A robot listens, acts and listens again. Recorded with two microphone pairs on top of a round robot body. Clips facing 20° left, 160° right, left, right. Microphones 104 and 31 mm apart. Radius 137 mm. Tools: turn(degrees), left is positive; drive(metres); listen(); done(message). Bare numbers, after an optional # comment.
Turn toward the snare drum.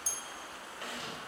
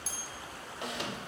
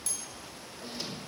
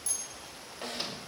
# The snare drum: 90° right.
turn(-90)
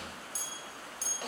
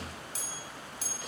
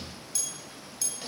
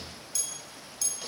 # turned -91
listen()
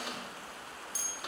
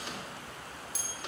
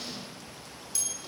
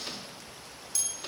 listen()
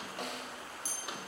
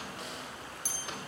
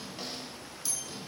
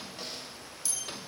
done("Found it: a snare drum, straight ahead.")